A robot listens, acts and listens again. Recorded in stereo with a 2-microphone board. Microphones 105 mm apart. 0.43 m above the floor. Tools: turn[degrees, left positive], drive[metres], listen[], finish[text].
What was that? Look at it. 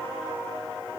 Action: listen[]
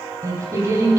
Thought: The singing: about 30° right or 150° right.
Action: turn[-30]
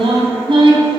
Thought: So it is at 120° right.
Action: turn[-120]
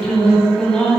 Action: finish[Found it: singing, straight ahead, 2 to 4 m away.]